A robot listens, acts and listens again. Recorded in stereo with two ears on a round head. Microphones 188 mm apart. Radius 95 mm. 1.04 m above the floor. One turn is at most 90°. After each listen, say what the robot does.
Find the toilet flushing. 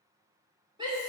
Keep listening.
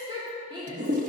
Turn 40° right.
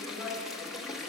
Found it: a toilet flushing, straight ahead, under 1 m away.